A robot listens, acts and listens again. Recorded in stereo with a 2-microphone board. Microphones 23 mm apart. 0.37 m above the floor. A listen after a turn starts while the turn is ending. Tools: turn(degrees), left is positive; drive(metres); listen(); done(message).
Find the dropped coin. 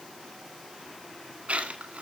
turn(degrees=-90)
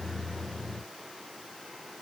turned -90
done("Facing where the dropped coin came from. I can't hear it now.")